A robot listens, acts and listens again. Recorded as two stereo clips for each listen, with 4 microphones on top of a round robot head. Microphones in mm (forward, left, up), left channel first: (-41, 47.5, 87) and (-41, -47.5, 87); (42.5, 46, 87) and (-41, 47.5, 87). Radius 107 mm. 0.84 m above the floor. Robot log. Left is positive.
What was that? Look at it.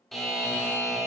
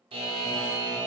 note: The buzzer: straight behind.
cmd yaw +180
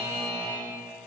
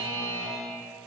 note: The buzzer is now 20° right.
cmd yaw -20
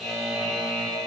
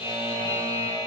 end: Found it: a buzzer, straight ahead.